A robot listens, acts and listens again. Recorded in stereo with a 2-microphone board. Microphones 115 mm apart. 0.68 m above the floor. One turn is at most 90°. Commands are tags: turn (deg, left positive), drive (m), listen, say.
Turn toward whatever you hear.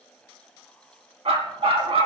<turn deg="-60"/>
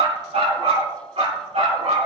<turn deg="-70"/>
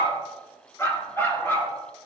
<turn deg="20"/>
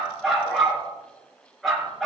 <say>Facing the dog barking, over 4 m away.</say>